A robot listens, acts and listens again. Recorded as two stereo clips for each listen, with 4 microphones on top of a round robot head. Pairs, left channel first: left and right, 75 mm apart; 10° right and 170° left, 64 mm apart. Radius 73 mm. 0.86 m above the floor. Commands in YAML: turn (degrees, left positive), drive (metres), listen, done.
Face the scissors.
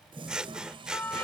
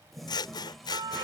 turn: -10
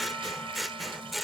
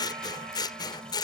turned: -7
done: "Facing the scissors."